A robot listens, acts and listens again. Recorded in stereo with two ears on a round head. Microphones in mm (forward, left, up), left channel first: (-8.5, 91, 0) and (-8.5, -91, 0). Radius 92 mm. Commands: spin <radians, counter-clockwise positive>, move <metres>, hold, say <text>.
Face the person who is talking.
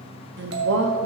spin -1.05
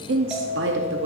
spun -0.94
spin -1.05
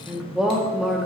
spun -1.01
say Facing the woman speaking, under 1 m away.